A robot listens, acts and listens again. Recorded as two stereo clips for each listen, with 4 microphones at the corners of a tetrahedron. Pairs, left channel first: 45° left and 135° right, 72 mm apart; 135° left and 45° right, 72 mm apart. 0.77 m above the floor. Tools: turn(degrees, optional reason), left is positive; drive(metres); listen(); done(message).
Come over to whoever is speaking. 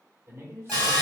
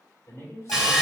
turn(degrees=175, reason="The man speaking: 175° left.")
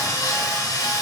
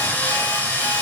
listen()
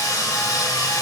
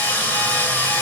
listen()
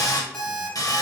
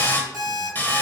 done("I heard a man speaking from this way, but can't make it out now. I did not reach it.")